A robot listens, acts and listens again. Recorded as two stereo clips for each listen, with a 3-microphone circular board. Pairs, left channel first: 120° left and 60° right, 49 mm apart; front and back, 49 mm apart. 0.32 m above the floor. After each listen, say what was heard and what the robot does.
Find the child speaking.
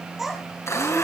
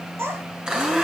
The child speaking: 145° right. Turn 145° right.
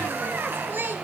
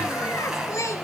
The child speaking is now 15° right. Turn 15° right.
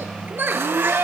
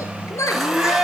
The child speaking is now 10° right. Turn 10° right.
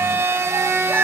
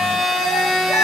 The child speaking is now 20° right. Turn 20° right.
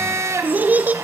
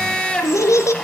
Facing the child speaking.